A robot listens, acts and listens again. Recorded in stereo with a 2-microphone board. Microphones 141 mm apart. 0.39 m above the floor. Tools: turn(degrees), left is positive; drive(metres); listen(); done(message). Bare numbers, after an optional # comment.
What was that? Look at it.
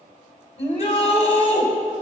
# The shout: about 50° left or 130° left.
turn(50)
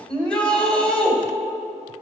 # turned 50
done("Found it: a shout, straight ahead.")